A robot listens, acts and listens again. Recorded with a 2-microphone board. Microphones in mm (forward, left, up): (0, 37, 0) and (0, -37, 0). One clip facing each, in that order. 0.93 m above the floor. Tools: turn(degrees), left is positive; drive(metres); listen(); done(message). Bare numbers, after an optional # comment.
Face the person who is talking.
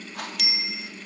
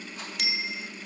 listen()
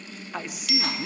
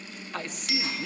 turn(30)
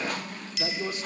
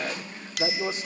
# So it is at 25° right.
turn(-25)
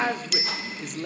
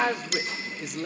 done("Facing the man speaking, 2 to 4 m away.")